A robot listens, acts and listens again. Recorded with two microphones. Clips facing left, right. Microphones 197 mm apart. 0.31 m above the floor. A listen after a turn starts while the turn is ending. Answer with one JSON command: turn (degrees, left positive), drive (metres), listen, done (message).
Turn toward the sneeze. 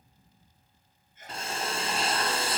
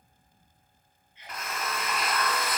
{"turn": 50}
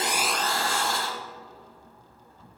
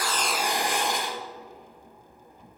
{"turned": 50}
{"listen": true}
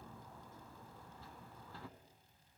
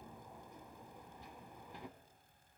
{"done": "I heard a sneeze, but can't make it out now. It was about straight ahead or 80° left."}